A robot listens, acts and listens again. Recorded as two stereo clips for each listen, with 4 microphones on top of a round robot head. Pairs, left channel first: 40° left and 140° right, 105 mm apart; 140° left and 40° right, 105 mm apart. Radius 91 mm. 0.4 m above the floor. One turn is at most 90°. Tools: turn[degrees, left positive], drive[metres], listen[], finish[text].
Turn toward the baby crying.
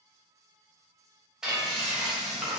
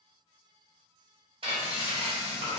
Action: listen[]
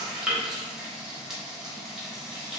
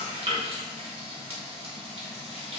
Action: listen[]
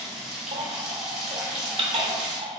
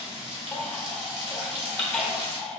Thought: The baby crying: 140° right.
Action: turn[-90]
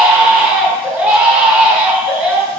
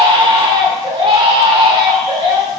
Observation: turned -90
Thought: The baby crying is now 65° right.
Action: turn[-65]
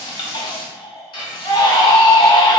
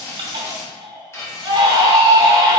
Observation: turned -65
Action: finish[Facing the baby crying.]